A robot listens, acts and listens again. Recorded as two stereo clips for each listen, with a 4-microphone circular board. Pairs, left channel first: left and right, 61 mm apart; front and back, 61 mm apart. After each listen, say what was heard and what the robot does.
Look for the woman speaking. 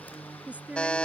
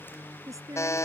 The woman speaking: 155° right. Turn 155° right.
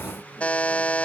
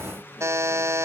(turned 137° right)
Nothing new. It was at 20° right. Turn 20° right.
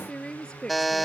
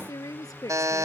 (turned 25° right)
The woman speaking is now 15° left. Turn 15° left.
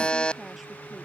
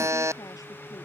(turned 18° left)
Keep listening.
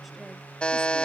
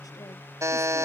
Keep listening.
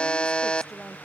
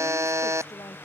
I heard a woman speaking from this way, but can't make it out now.